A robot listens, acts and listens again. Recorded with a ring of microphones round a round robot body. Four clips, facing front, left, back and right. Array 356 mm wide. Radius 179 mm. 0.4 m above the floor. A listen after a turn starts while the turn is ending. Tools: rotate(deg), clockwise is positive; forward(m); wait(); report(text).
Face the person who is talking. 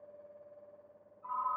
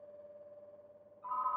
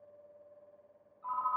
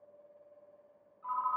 wait()
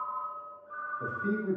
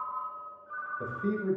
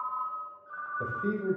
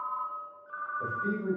rotate(-150)
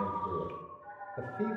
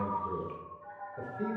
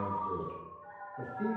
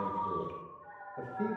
wait()
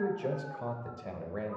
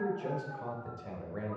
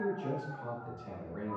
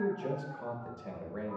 report("Facing the man speaking.")